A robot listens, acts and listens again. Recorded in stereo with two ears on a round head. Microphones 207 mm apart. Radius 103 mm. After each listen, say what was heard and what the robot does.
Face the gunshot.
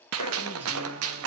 The gunshot: about 70° right or 110° right. Turn 70° right.
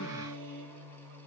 Keep listening.
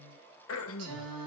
I heard a gunshot, but can't make it out now. It was about straight ahead or 40° right.